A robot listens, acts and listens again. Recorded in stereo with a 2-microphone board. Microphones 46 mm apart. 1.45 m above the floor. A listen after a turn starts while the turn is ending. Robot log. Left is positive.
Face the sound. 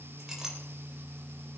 cmd yaw -30
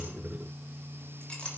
note: So it is at 20° left.
cmd yaw +20
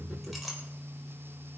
end: Facing the clink, over 4 m away.